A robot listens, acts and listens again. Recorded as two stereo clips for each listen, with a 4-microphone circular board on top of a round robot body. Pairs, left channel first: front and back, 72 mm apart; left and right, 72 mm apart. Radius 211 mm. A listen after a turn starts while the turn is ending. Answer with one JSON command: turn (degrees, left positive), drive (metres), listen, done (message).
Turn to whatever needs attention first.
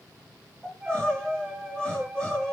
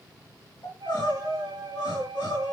{"turn": 80}
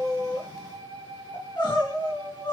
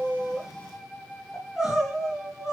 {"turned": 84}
{"done": "Facing the crying, over 4 m away."}